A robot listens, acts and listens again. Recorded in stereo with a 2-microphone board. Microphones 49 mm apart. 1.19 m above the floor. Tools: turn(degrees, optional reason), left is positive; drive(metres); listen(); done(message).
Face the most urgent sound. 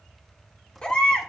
turn(degrees=20, reason="The baby crying: about 20° left or 160° left.")
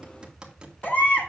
turn(degrees=135, reason="So it is at 135° left.")
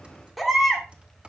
done("Found it: a baby crying, straight ahead.")